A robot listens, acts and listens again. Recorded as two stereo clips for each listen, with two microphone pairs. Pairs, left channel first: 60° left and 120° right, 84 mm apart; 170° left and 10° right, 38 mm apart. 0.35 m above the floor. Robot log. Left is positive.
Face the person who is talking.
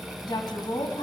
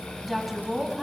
note: The woman speaking: 70° left.
cmd yaw +70
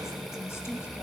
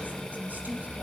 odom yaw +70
end: Found it: a woman speaking, straight ahead, 2 to 4 m away.